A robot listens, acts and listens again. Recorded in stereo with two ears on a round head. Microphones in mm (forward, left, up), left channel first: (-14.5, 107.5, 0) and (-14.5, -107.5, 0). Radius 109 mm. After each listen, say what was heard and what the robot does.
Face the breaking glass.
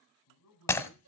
Turn 30° left.
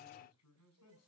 Keep listening.
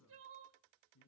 I heard breaking glass, but can't make it out now. It was about 20° right or 140° left.